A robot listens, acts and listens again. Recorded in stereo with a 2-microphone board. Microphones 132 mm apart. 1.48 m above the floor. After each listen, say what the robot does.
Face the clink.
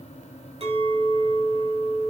Turn 45° right.
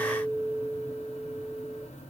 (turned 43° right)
Turn 90° right.
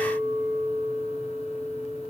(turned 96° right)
Facing the clink, over 4 m away.